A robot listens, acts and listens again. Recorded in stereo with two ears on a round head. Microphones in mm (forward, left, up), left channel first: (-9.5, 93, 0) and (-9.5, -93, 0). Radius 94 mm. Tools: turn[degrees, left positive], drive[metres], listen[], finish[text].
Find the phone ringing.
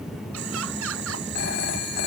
Thought: The phone ringing: about 55° left or 125° left.
Action: turn[55]
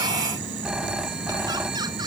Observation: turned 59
Action: finish[Found it: a phone ringing, straight ahead.]